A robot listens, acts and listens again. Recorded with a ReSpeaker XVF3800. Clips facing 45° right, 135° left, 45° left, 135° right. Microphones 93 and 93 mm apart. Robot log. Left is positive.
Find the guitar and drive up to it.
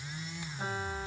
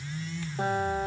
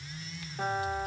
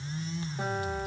note: The guitar: 140° left.
cmd yaw +140
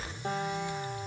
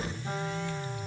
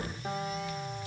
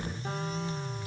cmd idle
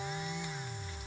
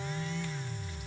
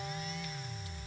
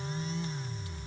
cmd idle
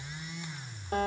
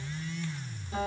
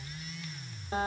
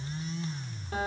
note: The guitar is now 15° right.
cmd yaw -15
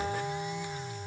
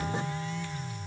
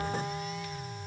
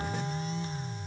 cmd idle
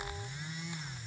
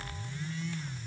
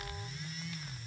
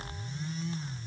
cmd idle
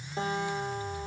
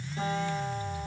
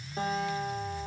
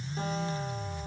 cmd fwd 1.0
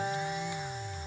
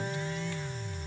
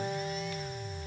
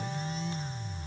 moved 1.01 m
cmd fwd 1.0
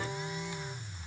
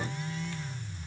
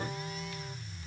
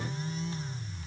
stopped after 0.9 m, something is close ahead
cmd idle
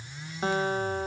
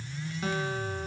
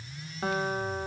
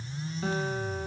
end: I am next to the guitar.